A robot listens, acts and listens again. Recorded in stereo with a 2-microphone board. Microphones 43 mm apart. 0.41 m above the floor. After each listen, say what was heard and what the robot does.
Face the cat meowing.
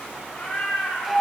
The cat meowing: about 45° left or 135° left. Turn 45° left.
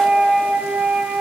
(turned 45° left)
Keep listening.
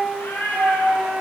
So it is at 110° left. Turn 110° left.
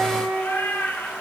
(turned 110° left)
The cat meowing is now 75° left. Turn 75° left.
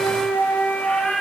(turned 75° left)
The cat meowing is now 10° left. Turn 10° left.
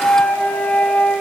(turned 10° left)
Keep listening.
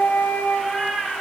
Facing the cat meowing, 1 to 2 m away.